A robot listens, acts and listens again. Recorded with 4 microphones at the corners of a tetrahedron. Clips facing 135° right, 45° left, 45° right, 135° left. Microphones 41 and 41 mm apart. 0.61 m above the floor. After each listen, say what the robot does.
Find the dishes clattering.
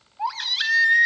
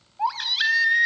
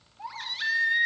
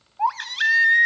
Keep listening.
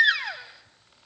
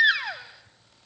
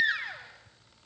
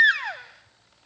Keep listening.
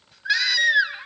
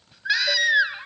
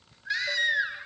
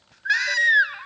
I can't make out dishes clattering, only a baby crying.